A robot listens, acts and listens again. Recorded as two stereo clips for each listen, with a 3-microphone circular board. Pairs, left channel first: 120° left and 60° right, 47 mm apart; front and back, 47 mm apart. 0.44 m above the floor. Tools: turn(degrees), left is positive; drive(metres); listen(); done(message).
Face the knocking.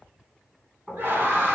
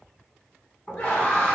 turn(degrees=35)
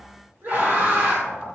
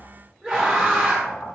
turn(degrees=-10)
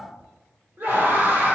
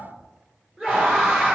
done("Facing the knocking, 2 to 4 m away.")